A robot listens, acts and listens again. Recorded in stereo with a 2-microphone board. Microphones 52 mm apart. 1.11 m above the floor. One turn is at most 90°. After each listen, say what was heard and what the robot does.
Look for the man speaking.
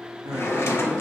Turn 90° right.
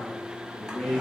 So it is at 10° left. Turn 10° left.
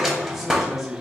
Found it: a man speaking, straight ahead.